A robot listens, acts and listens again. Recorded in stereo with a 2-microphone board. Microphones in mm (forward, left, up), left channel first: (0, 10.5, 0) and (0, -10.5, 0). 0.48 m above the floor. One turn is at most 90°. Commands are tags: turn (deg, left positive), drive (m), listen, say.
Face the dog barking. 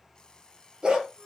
<turn deg="-55"/>
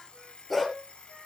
<say>Found it: a dog barking, straight ahead, 2 to 4 m away.</say>